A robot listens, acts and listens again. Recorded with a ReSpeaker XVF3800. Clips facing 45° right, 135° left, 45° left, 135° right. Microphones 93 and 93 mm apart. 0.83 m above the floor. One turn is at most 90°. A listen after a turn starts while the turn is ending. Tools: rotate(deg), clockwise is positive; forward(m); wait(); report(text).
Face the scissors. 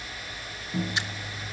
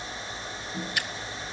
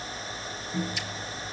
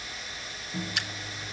rotate(90)
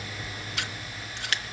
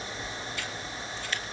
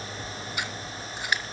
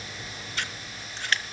rotate(35)
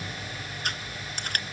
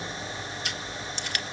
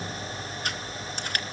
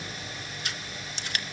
report("Found it: scissors, straight ahead, 2 to 4 m away.")